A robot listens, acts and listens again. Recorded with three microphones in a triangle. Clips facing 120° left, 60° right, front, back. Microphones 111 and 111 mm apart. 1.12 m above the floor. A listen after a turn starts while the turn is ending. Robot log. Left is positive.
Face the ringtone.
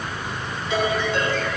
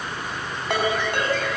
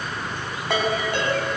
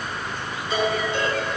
note: The ringtone: 30° right.
cmd yaw -30
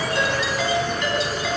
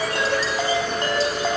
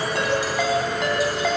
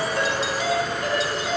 note: The ringtone is now 10° right.
cmd yaw -10
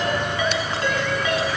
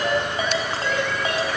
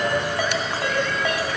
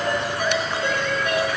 end: Found it: a ringtone, straight ahead.